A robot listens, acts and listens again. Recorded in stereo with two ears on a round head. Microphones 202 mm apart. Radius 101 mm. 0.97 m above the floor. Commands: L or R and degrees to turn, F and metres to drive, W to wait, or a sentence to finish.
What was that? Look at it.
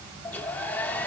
L30
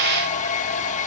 L140
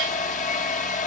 L40
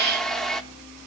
Facing the hair dryer, 1 to 2 m away.